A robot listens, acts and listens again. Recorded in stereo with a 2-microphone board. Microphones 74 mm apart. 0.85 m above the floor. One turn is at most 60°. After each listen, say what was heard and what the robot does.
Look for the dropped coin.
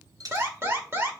The dropped coin: about 55° right or 125° right. Turn 55° right.
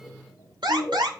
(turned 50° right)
Keep listening.
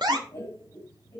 I heard a dropped coin, but can't make it out now. It was about 5° right or 75° right.